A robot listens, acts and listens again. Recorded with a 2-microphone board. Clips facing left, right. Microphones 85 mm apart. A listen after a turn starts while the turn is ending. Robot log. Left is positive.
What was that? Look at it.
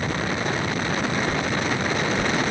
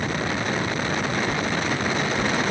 note: The whoosh: about 75° left or 105° left.
cmd yaw +75
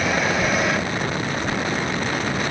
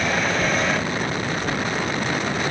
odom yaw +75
end: Found it: a whoosh, straight ahead.